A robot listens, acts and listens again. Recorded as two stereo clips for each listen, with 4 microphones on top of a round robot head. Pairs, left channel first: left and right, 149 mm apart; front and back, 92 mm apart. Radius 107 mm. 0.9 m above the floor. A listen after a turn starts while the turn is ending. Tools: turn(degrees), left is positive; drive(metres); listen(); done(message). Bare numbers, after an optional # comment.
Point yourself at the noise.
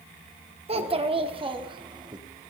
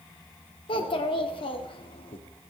# The child speaking: 30° right.
turn(-30)
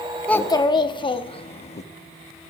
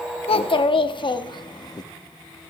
# The child speaking is now 45° left.
turn(45)
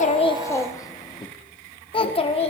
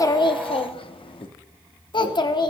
# The child speaking is now 40° left.
turn(40)
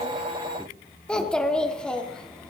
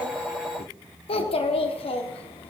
done("Facing the child speaking.")